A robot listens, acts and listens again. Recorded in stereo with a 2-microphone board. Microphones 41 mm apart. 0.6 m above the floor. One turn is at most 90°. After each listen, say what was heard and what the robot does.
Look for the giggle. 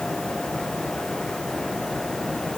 Keep listening.
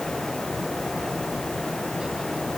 Keep listening.
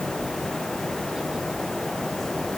I can't make out a giggle.